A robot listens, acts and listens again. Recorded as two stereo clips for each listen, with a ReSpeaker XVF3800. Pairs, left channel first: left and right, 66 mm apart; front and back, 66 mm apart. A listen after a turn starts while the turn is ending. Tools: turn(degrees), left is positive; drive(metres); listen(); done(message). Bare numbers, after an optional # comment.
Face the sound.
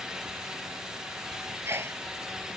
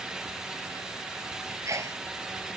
# The sneeze: 140° right.
turn(-140)
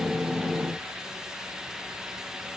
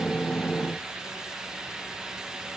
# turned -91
# Nothing new. It was at 50° right.
turn(-50)
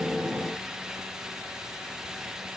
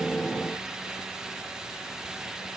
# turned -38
# Nothing new. It was at 10° right.
turn(-10)
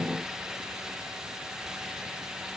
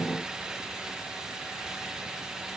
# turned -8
done("I heard a sneeze from this way, but can't make it out now.")